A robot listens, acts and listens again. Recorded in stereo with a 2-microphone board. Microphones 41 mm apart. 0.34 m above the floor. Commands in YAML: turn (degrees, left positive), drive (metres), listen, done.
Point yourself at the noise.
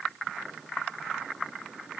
listen: true
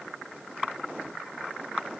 listen: true
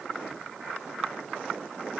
done: "I can't make out anything to turn to."